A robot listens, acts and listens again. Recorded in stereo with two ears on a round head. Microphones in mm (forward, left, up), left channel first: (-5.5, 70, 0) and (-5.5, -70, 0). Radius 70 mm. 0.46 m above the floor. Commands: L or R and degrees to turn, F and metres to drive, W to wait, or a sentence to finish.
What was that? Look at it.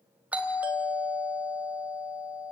R30
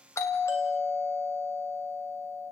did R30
L20
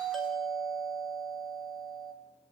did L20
Facing the doorbell, 2 to 4 m away.